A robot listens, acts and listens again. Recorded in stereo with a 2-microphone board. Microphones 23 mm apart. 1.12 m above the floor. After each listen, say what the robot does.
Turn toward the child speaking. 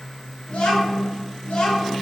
Turn 90° left.
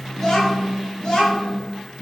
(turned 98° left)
Turn 30° left.
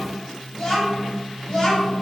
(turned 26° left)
Turn 30° left.
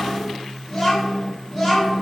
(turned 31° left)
Found it: a child speaking, straight ahead, 1 to 2 m away.